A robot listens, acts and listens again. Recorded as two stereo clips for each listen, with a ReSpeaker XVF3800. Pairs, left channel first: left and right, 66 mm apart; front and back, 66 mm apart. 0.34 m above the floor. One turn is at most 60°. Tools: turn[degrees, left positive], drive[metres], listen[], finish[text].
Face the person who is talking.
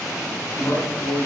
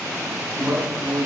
Thought: The man speaking: 125° left.
Action: turn[60]
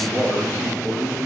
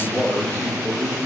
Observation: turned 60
Thought: The man speaking is now 65° left.
Action: turn[60]
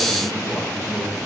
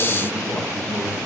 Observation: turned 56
Thought: The man speaking is now 10° left.
Action: turn[10]
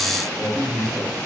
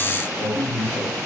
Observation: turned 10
Action: finish[Facing the man speaking, over 4 m away.]